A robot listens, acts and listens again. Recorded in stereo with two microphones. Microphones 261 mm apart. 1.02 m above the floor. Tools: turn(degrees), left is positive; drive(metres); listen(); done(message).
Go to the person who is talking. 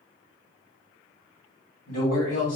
turn(degrees=65)
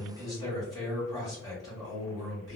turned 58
turn(degrees=15)
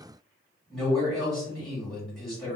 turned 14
drive(metres=1.0)
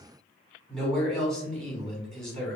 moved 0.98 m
drive(metres=1.0)
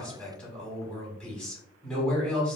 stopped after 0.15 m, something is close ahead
done("Arrived at the man speaking, straight ahead.")